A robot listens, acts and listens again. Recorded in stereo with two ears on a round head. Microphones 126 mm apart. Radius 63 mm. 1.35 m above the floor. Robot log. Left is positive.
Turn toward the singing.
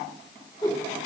cmd idle
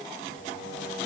note: The singing: about 75° left or 105° left.
cmd yaw +75
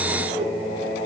note: So it is at 40° left.
cmd yaw +40
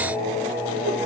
note: The singing is now 20° left.
cmd yaw +20
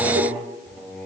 note: The singing is now 10° left.
cmd yaw +10
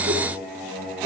end: Found it: singing, straight ahead, over 4 m away.